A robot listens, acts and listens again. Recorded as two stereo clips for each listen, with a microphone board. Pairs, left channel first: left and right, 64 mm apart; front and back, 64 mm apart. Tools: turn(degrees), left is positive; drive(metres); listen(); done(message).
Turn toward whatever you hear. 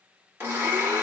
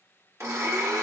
turn(degrees=-140)
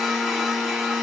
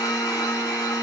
done("Found it: a blender, straight ahead, 1 to 2 m away.")